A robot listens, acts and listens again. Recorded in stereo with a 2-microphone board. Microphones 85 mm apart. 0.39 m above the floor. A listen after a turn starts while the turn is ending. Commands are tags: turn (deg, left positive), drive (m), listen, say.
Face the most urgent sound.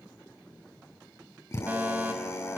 <turn deg="-20"/>
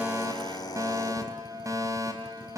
<turn deg="-135"/>
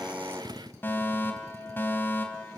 <turn deg="25"/>
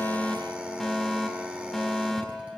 <say>Found it: a fire alarm, straight ahead.</say>